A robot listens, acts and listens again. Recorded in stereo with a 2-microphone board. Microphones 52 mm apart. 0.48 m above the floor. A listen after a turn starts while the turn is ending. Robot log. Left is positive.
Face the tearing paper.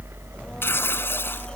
note: The tearing paper: about 50° left or 130° left.
cmd yaw +50
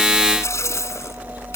note: So it is at 75° left.
cmd yaw +75
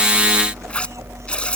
cmd idle
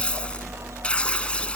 note: The tearing paper is now 20° left.
cmd yaw +20
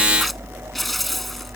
end: Facing the tearing paper.